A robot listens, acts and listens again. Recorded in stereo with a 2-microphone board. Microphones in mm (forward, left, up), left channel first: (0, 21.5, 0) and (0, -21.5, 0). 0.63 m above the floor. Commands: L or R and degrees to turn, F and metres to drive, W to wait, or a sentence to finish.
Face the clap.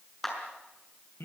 L30
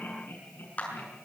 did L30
L140
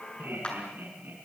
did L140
L25
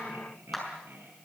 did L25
Found it: a clap, straight ahead, over 4 m away.